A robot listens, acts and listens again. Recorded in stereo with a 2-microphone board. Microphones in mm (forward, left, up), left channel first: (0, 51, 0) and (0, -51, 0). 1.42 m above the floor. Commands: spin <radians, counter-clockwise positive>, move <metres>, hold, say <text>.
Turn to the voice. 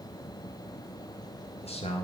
spin 1.57
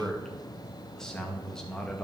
spin 0.17
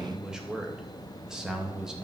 say Facing the man speaking, 2 to 4 m away.